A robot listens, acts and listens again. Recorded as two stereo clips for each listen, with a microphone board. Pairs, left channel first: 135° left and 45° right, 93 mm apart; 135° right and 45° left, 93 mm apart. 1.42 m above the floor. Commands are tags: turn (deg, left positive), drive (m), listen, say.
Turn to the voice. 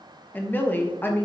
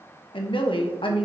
<turn deg="-155"/>
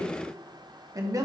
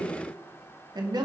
<say>Facing the woman speaking.</say>